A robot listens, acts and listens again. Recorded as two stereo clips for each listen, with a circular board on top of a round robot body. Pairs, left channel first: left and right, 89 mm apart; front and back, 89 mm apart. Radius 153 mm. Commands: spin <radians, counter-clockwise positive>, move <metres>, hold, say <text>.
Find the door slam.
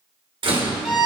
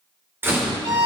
spin -2.01
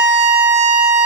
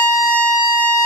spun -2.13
spin 0.17
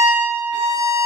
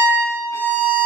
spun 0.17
say Facing where the door slam came from. I can't hear it now.